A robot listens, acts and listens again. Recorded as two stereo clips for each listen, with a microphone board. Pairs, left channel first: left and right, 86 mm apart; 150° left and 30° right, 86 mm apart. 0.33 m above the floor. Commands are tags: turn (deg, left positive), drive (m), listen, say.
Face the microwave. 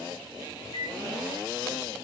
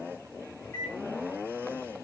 <turn deg="95"/>
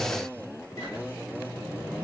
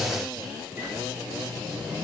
<turn deg="35"/>
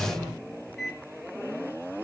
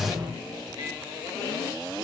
<say>Found it: a microwave, straight ahead.</say>